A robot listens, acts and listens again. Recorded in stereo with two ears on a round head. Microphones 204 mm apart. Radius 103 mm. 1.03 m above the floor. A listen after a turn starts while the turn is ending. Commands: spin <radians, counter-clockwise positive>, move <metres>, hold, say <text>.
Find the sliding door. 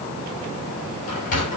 spin 0.70
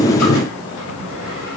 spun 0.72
hold
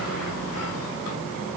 hold
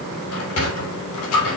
spin 1.75
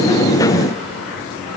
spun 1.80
hold
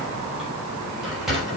say Found it: a sliding door, straight ahead, over 4 m away.